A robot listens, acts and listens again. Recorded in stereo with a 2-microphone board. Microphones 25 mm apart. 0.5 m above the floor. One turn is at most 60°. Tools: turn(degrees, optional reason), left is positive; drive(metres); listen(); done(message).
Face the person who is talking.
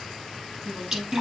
turn(degrees=-60, reason="The woman speaking: about 75° right or 105° right.")
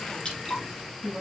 turn(degrees=-35, reason="So it is at 35° right.")
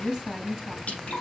done("Found it: a woman speaking, straight ahead, over 4 m away.")